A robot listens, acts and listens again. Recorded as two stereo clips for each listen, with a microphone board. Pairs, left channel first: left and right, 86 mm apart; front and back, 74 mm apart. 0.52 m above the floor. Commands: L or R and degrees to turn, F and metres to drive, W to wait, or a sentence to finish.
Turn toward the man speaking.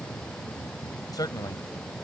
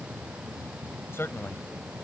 L55
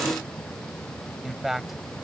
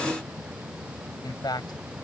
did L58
Found it: a man speaking, straight ahead.